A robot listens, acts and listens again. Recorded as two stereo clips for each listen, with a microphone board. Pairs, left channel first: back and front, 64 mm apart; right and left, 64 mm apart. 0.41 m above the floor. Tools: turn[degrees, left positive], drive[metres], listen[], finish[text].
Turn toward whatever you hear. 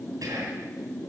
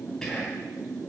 Thought: The whispering: 10° right.
Action: turn[-10]
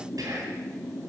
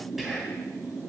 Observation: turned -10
Action: finish[Facing the whispering, 2 to 4 m away.]